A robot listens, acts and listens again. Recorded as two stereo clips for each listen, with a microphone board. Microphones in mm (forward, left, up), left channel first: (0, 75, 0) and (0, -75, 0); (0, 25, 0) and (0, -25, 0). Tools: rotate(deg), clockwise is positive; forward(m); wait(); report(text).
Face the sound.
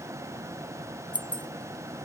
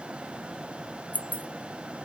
rotate(-35)
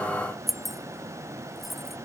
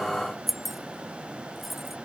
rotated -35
report("Facing the keys jangling.")